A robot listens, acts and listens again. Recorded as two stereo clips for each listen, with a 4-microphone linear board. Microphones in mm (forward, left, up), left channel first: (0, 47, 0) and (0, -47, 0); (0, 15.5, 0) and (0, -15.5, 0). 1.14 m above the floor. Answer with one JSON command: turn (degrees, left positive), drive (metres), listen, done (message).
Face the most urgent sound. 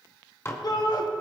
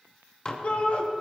{"turn": 45}
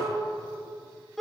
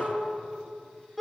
{"done": "Facing the shout."}